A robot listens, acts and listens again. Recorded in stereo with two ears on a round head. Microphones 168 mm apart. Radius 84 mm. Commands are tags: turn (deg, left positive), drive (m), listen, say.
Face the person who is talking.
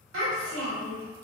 <turn deg="-90"/>
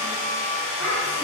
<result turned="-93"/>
<listen/>
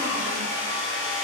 <listen/>
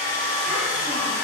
<say>Facing where the child speaking came from. I can't hear it now.</say>